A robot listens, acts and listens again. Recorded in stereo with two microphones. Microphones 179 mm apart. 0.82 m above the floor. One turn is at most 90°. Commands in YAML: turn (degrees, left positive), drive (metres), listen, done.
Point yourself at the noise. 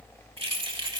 turn: -25
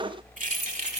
turn: -40
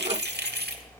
turn: -90
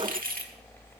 turn: -55
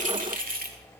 turn: -55
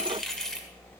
done: "Found it: keys jangling, straight ahead, 1 to 2 m away."